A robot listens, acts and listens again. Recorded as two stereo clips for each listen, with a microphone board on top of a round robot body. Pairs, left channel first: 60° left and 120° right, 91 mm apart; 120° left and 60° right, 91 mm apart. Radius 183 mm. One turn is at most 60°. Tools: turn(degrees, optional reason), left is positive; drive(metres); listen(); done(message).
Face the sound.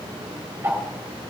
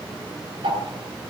turn(degrees=-55, reason="The ticking: 55° right.")
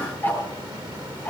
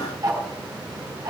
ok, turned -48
done("Found it: ticking, straight ahead, over 4 m away.")